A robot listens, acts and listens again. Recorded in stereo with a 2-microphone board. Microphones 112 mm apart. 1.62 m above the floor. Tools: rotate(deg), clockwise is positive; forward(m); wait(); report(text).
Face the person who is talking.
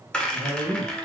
rotate(90)
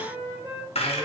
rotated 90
wait()
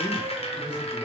wait()
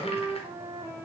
report("I heard a man speaking from this way, but can't make it out now.")